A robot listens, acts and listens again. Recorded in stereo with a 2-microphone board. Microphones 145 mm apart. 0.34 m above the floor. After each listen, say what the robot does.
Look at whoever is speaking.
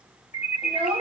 Turn 40° right.
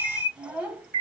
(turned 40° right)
Turn 10° right.
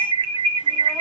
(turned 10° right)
Keep listening.
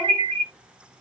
Keep listening.
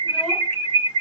I heard a child speaking from this way, but can't make it out now.